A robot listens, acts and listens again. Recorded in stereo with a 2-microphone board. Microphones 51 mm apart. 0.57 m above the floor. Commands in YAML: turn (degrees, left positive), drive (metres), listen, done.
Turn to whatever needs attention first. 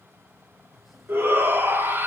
turn: -45
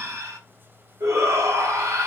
turn: -85
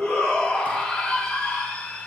turn: 15
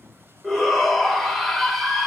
done: "Found it: a shout, straight ahead, 2 to 4 m away."